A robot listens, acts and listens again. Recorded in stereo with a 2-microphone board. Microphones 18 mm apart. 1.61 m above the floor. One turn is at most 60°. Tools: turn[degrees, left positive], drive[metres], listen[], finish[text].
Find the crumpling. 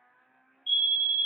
Action: listen[]
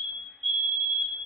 Action: listen[]
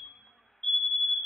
Action: finish[I can't make out crumpling, only a fire alarm.]